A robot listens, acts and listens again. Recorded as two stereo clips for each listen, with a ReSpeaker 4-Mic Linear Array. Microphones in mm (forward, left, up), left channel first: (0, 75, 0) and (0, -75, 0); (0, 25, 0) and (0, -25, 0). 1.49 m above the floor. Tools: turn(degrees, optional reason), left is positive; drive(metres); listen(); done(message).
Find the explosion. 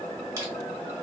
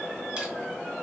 listen()
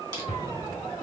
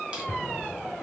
turn(degrees=40, reason="The explosion: about 40° left or 140° left.")
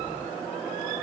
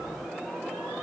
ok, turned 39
listen()
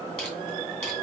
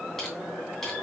done("I heard an explosion, but can't make it out now. It was about straight ahead or 100° left.")